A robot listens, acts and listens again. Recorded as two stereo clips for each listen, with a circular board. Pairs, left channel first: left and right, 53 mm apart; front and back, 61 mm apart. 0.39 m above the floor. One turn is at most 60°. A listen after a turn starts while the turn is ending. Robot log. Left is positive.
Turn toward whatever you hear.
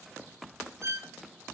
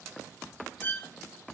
note: The violin: 60° right.
cmd yaw -60
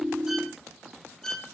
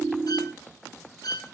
note: The violin is now 10° left.
cmd yaw +10
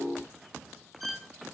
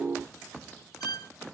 end: Found it: a violin, straight ahead, over 4 m away.